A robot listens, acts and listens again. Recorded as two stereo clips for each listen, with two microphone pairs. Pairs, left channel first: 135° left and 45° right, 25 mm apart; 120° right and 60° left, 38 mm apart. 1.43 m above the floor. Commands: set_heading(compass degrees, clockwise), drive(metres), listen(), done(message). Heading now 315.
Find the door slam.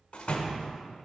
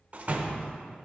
set_heading(205)
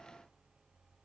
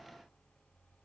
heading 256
set_heading(206)
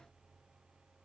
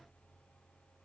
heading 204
done("Facing where the door slam came from. I can't hear it now.")